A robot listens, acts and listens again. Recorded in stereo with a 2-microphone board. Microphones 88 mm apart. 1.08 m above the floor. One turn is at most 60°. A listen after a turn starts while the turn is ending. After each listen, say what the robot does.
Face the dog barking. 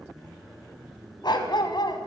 Turn 60° left.
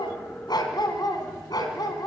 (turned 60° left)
Turn 50° left.
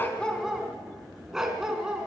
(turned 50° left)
Found it: a dog barking, straight ahead.